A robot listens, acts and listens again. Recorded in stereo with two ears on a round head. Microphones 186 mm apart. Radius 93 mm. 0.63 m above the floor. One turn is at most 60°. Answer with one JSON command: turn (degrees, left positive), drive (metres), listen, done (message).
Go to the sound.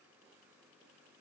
{"listen": true}
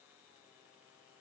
{"listen": true}
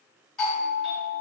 {"turn": 30}
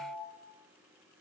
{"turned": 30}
{"turn": 60}
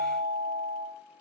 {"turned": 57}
{"turn": 60}
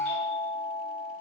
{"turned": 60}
{"turn": 30}
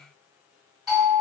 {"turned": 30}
{"drive": 1.0}
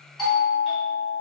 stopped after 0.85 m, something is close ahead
{"done": "Arrived at the doorbell, straight ahead."}